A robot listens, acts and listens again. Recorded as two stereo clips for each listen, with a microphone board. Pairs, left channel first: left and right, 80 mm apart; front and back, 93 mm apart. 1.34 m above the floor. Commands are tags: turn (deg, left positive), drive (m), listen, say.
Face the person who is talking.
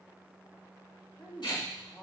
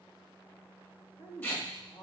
<say>Facing the woman speaking.</say>